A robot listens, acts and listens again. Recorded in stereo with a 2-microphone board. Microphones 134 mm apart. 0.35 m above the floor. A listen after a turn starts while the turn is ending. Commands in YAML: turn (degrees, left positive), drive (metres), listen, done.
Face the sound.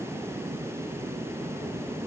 listen: true
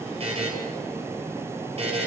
turn: -45
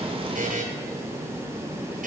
turn: -90
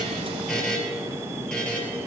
done: "Found it: a buzzer, straight ahead."